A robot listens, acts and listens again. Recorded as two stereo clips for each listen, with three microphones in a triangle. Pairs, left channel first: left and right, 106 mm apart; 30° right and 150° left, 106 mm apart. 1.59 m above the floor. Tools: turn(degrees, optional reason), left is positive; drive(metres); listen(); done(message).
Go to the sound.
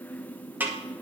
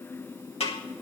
turn(degrees=-15, reason="The snare drum: 15° right.")
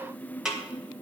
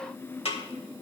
drive(metres=1.0)
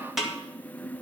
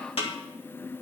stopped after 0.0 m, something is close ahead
done("Something is in my way. I am facing the snare drum but have not reached it.")